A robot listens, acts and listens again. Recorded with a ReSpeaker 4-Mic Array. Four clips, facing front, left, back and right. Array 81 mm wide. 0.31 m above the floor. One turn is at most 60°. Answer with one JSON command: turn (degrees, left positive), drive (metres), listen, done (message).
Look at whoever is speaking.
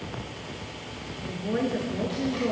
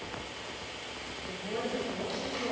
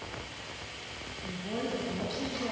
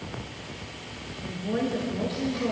{"turn": -20}
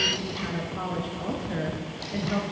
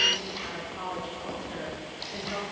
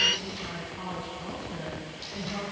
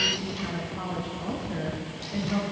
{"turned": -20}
{"done": "Facing the woman speaking, over 4 m away."}